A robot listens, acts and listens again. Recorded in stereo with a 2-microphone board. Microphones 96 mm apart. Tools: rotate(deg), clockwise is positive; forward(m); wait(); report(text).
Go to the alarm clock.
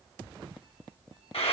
wait()
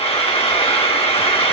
wait()
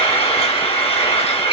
report("I can't make out an alarm clock to turn to.")